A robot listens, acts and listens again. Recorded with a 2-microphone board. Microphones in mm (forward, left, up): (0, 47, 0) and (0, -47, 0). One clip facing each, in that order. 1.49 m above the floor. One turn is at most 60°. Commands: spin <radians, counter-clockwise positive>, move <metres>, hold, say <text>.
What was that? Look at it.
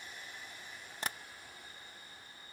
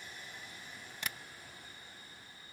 spin 0.61
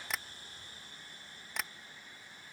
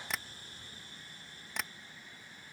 say Facing the tapping.